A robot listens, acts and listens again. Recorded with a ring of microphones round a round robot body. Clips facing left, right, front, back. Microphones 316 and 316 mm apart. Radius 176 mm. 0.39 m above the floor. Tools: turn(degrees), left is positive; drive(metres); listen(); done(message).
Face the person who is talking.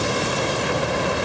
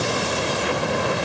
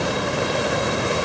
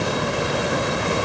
listen()
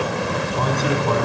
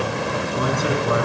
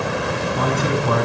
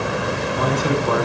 turn(degrees=-15)
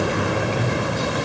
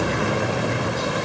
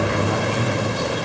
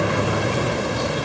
done("Found it: a man speaking, straight ahead.")